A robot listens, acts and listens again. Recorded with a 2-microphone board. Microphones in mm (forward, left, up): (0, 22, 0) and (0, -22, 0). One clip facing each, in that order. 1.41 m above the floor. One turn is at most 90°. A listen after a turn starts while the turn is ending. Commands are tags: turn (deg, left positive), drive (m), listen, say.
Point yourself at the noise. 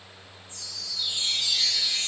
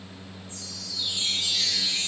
<turn deg="25"/>
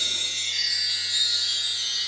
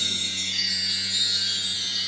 <turn deg="90"/>
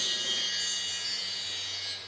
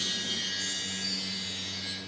<turn deg="55"/>
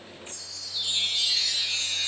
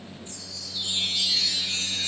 <say>Facing the chime, 1 to 2 m away.</say>